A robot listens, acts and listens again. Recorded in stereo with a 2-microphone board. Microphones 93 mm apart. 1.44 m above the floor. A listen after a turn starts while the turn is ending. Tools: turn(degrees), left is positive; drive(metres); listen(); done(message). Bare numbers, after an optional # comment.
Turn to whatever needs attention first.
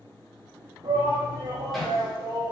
turn(-90)
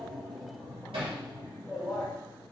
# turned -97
done("Found it: a shout, straight ahead.")